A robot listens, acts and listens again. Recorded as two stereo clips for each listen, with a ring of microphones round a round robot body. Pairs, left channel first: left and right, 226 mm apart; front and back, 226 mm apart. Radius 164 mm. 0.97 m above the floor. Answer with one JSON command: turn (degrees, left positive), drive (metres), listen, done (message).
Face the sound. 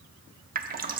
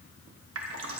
{"turn": -140}
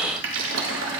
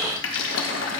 {"turn": -45}
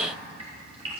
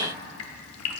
{"turn": -15}
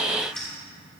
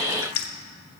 {"done": "Found it: dripping, straight ahead, under 1 m away."}